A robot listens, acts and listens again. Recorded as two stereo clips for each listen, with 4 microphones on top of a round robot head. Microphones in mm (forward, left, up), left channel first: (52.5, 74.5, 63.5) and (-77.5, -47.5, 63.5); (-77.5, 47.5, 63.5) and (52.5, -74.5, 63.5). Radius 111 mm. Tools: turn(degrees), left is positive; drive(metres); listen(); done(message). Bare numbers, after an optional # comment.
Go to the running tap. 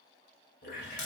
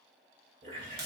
# The running tap: 10° left.
turn(10)
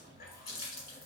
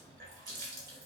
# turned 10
drive(1.0)
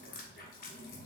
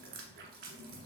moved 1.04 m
drive(1.0)
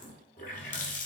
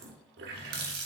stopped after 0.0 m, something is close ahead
done("I am next to the running tap.")